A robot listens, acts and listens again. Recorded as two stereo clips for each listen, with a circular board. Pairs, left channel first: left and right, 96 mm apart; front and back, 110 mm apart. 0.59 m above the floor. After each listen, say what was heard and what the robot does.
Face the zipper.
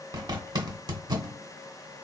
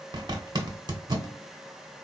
The zipper: 130° right. Turn 130° right.
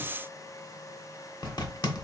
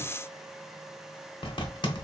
The zipper is now 45° left. Turn 45° left.
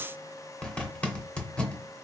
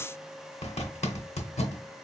The zipper is now 10° left. Turn 10° left.
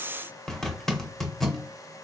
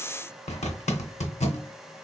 Facing the zipper.